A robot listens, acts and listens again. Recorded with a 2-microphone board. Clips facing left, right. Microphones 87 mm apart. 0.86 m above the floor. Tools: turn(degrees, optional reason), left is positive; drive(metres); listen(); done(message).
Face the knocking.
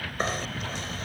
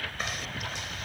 turn(degrees=35, reason="The knocking: about 35° left or 145° left.")
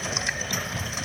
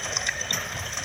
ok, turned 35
done("Facing the knocking.")